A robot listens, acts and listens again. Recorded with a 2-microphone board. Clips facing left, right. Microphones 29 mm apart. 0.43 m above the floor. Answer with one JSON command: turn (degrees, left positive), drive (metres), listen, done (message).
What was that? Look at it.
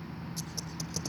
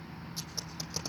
{"listen": true}
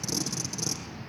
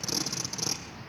{"turn": -20}
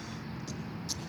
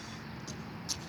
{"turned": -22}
{"listen": true}
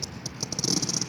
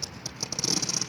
{"done": "Facing the tape being pulled."}